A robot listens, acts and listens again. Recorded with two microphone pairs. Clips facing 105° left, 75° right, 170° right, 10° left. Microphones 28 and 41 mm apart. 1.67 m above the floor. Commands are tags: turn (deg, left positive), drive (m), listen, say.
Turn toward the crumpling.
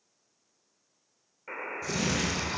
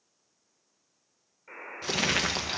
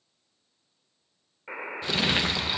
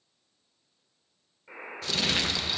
<turn deg="-100"/>
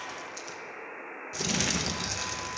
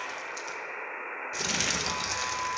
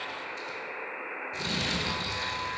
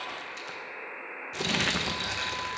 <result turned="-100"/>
<say>Found it: crumpling, straight ahead, 1 to 2 m away.</say>